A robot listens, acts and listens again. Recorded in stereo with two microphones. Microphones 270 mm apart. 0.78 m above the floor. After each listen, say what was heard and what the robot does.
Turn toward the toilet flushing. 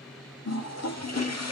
The toilet flushing: about 70° left or 110° left. Turn 70° left.
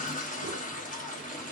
So it is at 30° left. Turn 30° left.
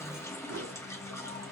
The toilet flushing is now 10° left. Turn 10° left.
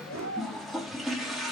Found it: a toilet flushing, straight ahead, under 1 m away.